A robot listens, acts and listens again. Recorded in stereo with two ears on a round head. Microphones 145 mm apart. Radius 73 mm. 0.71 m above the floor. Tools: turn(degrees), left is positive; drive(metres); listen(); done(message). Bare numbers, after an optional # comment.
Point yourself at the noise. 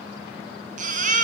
# The baby crying: about 50° right or 130° right.
turn(-50)
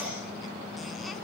listen()
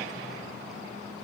listen()
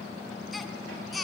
done("Facing the baby crying.")